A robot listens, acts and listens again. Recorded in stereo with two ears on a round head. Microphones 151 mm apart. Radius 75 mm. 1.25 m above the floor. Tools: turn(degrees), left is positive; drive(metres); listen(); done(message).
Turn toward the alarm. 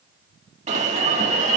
turn(degrees=-45)
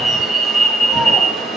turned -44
done("Facing the alarm, 2 to 4 m away.")